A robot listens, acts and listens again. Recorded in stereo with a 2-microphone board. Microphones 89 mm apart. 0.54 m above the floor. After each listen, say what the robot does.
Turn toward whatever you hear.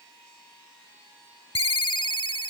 Turn 90° left.
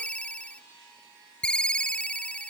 Turn 10° left.
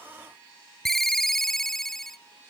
Facing the ringtone.